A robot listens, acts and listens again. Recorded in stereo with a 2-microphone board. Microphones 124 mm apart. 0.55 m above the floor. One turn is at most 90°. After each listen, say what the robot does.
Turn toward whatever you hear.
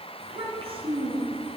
Turn 45° right.
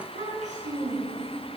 Turn 90° right.
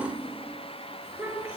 Turn 15° right.
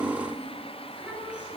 Turn 10° right.
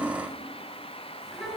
Found it: a child speaking, straight ahead, over 4 m away.